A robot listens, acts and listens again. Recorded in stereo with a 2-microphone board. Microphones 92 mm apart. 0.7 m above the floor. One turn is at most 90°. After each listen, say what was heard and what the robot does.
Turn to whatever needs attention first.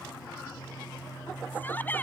The shout: about 20° left or 160° left. Turn 20° left.
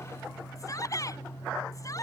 So it is at 140° left. Turn 90° left.
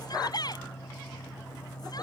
The shout is now 50° left. Turn 50° left.
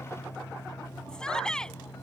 The shout is now 10° left. Turn 10° left.
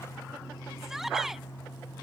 Facing the shout.